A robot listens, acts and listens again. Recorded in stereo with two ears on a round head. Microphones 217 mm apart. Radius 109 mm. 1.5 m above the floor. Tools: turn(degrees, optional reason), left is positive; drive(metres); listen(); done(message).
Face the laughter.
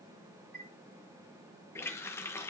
listen()
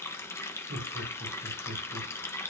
turn(degrees=-65, reason="The laughter: about 65° right or 115° right.")
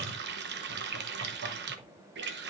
listen()
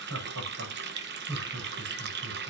turn(degrees=-60, reason="So it is at 60° right.")
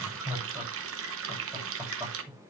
turn(degrees=-10, reason="The laughter is now 10° right.")
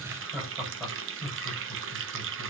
done("Facing the laughter.")